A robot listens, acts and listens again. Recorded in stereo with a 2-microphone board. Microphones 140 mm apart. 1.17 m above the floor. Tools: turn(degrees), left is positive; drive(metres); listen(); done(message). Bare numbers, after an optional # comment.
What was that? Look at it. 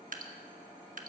# The dripping: about 75° right or 105° right.
turn(-75)
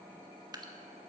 # So it is at 30° right.
turn(-30)
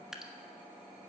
done("Facing the dripping, 1 to 2 m away.")